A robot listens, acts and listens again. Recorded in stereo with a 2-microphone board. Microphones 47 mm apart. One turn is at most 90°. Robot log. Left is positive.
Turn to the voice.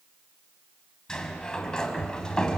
cmd idle
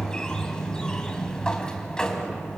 cmd idle
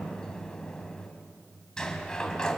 end: I can't make out anyone speaking, only a sliding door.